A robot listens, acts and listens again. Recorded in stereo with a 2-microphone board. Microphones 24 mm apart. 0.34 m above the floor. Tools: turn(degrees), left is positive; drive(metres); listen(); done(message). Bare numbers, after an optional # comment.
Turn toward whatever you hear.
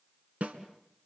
# The snare drum: about 75° right or 105° right.
turn(-75)
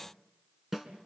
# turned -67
# So it is at 15° right.
turn(-15)
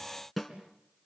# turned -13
done("Found it: a snare drum, straight ahead.")